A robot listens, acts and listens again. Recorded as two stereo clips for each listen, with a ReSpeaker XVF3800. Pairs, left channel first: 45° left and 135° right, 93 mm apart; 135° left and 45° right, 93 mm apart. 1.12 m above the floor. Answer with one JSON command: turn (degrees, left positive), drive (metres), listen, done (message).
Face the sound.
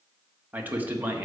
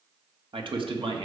{"turn": -65}
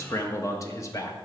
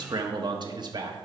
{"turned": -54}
{"turn": -10}
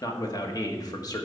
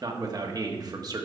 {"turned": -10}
{"done": "Found it: a man speaking, straight ahead, 1 to 2 m away."}